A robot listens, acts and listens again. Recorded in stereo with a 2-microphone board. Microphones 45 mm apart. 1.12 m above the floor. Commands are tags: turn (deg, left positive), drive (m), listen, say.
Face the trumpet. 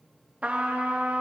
<turn deg="-30"/>
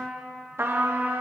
<turn deg="-115"/>
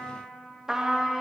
<turn deg="-15"/>
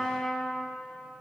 <say>Found it: a trumpet, straight ahead, 1 to 2 m away.</say>